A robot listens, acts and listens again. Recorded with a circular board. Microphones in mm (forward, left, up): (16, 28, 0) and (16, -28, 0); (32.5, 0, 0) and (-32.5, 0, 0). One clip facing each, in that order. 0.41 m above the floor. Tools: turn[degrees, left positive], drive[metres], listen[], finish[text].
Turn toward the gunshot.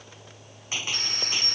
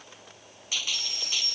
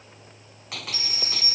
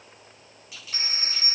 Thought: The gunshot: 30° left.
Action: turn[30]
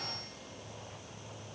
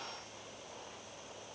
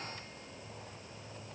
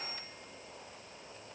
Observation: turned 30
Action: finish[I heard a gunshot from this way, but can't make it out now.]